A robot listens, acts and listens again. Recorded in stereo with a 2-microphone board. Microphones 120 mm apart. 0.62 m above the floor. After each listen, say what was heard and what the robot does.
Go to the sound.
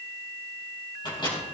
The microwave: about 40° left or 140° left. Turn 40° left.
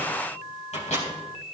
So it is at 105° left. Turn 105° left.
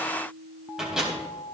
Drive 1.0 m forward.
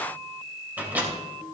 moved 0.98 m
The microwave is now 15° right. Turn 15° right.
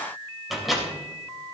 Drive 1.0 m forward.
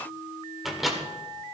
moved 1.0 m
Drive 1.0 m forward.
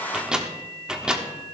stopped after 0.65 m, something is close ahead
The microwave is now 10° right. Turn 10° right.
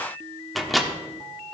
I am next to the microwave.